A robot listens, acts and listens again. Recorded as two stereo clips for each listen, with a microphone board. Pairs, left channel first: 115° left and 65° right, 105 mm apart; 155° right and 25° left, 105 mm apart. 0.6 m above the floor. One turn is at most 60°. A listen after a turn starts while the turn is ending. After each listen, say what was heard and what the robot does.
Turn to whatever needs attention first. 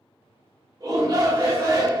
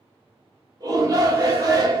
The shout: 25° right. Turn 25° right.
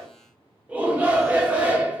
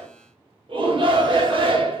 Facing the shout.